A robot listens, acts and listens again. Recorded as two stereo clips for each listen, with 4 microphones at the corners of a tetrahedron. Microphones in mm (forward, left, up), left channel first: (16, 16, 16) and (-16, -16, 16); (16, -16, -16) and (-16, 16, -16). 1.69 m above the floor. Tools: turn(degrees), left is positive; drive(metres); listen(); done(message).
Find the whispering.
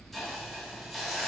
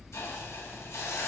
listen()
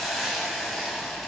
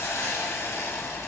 listen()
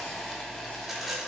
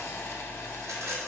done("I can't make out whispering, only a hiss and a rattle.")